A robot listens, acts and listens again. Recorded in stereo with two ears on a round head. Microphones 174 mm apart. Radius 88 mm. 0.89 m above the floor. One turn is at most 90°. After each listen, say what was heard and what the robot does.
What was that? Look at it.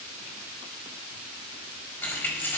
Turn 30° left.
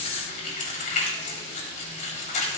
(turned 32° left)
So it is at 135° left. Turn 90° left.
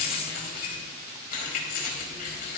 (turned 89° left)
The keys jangling is now 50° left. Turn 50° left.
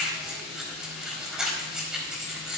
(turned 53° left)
Facing the keys jangling, 2 to 4 m away.